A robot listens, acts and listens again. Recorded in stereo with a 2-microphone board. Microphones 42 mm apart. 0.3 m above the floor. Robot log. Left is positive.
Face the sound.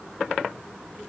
cmd idle
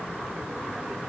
cmd idle
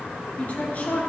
note: The woman speaking: about 40° left or 140° left.
cmd yaw +40
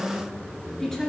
note: So it is at 10° left.
cmd yaw +10
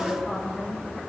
end: Found it: a woman speaking, straight ahead.